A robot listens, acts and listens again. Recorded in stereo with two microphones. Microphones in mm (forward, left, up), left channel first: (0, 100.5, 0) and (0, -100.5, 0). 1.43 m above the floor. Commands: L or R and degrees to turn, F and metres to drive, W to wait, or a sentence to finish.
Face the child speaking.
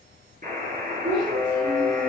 R20
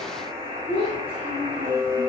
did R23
R30
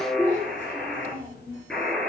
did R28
L10
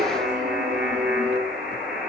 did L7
W
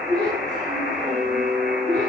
Facing the child speaking, 2 to 4 m away.